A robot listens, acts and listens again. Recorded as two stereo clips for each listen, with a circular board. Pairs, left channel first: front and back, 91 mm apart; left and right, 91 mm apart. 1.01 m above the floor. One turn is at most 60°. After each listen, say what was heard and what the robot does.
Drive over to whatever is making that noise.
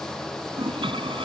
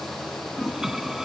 The toilet flushing: 175° right. Turn 60° right.
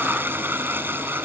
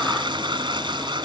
The toilet flushing is now 115° right. Turn 60° right.
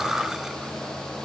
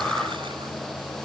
Nothing new. It was at 55° right. Turn 55° right.
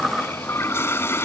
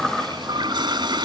The toilet flushing is now 60° right. Turn 60° right.
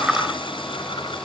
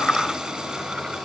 Keep listening.
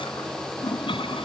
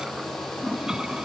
The toilet flushing is now 10° right. Turn 10° right.
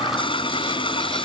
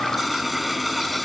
Drive 1.0 m forward.
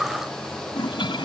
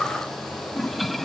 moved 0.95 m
Drive 1.0 m forward.
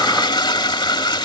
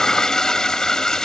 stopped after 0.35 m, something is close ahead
Arrived at the toilet flushing, straight ahead.